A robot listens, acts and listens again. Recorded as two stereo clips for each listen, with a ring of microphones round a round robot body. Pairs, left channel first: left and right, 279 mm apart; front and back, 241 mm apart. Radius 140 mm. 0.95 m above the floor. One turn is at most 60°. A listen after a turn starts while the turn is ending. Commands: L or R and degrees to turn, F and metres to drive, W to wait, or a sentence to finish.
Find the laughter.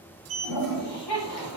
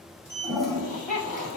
L55
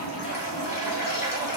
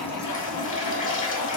W
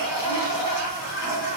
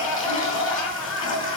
L25
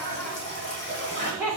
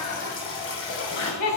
R10
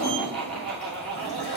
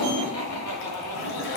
Facing the laughter.